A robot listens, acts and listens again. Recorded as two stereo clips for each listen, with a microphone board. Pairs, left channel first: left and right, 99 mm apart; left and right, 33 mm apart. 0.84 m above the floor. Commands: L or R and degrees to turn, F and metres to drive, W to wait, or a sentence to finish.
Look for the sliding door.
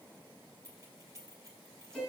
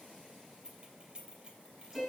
W
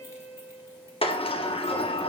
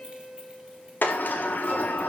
L70
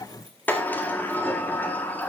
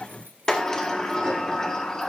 L20
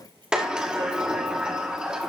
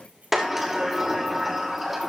R10
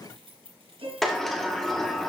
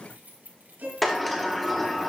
Facing the sliding door.